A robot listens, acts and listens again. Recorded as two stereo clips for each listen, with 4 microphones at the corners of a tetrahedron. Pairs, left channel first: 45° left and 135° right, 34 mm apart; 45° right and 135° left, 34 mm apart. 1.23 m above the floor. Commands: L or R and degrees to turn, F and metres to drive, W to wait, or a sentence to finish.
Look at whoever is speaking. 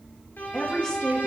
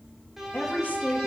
R20
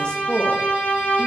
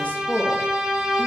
Found it: a woman speaking, straight ahead.